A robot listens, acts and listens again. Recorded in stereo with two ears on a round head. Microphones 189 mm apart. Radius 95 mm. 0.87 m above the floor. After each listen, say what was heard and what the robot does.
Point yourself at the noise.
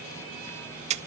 The splash: about 35° right or 145° right. Turn 35° right.
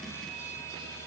Keep listening.
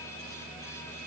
I heard a splash, but can't make it out now. It was about straight ahead or 110° right.